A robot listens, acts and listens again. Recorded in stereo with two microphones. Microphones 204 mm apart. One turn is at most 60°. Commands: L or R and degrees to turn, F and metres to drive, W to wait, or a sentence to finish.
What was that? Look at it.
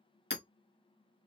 L60
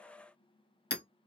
L60
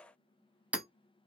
Found it: hammering, straight ahead, under 1 m away.